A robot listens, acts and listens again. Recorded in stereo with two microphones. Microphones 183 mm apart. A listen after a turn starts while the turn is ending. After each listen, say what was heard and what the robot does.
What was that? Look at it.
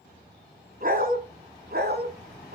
The dog barking: about 65° right or 115° right. Turn 65° right.
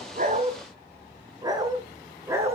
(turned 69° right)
So it is at 15° right. Turn 15° right.
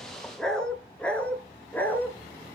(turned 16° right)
The dog barking is now 10° left. Turn 10° left.
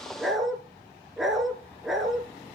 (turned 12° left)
Facing the dog barking.